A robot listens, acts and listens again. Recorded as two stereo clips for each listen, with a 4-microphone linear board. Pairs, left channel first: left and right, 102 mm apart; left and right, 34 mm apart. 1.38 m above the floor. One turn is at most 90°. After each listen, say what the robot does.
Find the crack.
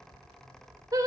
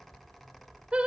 Keep listening.
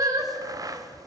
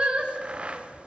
Turn 35° right.
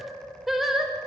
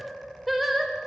Keep listening.
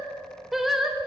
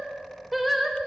I heard a crack, but can't make it out now. It was about straight ahead or 110° right.